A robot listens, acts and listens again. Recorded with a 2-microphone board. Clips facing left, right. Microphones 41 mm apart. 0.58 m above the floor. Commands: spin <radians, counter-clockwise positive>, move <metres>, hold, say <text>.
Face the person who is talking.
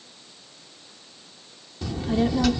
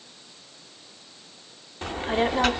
spin -0.79
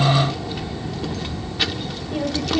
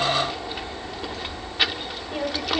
spin -0.26
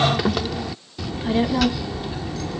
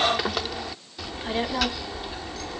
say Found it: a child speaking, straight ahead.